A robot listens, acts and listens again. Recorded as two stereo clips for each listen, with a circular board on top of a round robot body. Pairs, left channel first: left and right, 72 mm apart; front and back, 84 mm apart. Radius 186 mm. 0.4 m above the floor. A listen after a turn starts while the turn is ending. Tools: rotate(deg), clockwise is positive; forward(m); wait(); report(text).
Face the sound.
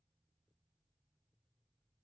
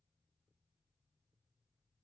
wait()
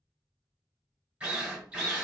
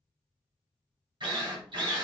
rotate(165)
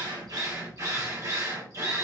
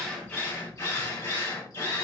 rotate(50)
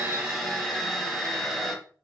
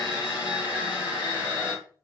report("Facing the drill, 2 to 4 m away.")